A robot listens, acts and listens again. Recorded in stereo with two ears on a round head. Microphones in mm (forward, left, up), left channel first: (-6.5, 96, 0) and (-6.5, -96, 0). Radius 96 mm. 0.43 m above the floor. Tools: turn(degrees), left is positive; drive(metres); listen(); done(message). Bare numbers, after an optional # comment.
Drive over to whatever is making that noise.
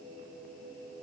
listen()
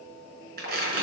# The tearing paper: about 50° right or 130° right.
turn(-50)
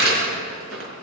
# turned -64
# So it is at 70° right.
turn(-70)
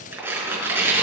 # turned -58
# The tearing paper is now 10° right.
turn(-10)
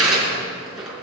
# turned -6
drive(1.0)
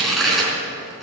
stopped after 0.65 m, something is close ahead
done("Something is in my way. I am facing the tearing paper but have not reached it.")